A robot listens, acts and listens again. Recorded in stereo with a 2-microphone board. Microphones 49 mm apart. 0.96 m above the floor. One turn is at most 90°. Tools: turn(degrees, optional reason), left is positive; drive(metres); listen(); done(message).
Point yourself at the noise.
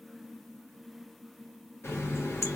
turn(degrees=65, reason="The running tap: about 65° left or 115° left.")
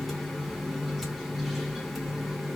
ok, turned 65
done("Facing the running tap.")